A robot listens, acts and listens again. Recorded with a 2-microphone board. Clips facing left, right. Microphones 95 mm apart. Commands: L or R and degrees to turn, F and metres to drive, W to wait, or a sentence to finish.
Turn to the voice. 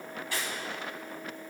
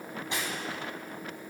W
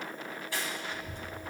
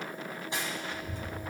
L60
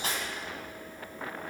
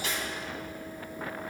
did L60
W
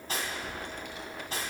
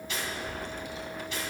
L60
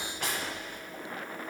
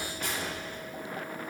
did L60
L15
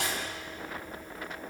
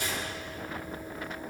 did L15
Facing the child speaking, 1 to 2 m away.